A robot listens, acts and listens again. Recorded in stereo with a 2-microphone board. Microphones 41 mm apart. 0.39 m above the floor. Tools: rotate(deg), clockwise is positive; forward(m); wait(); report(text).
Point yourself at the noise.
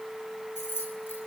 rotate(-60)
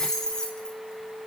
rotate(-15)
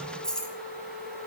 rotate(-20)
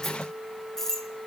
rotate(-10)
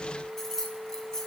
rotate(-15)
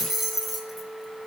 report("Found it: keys jangling, straight ahead.")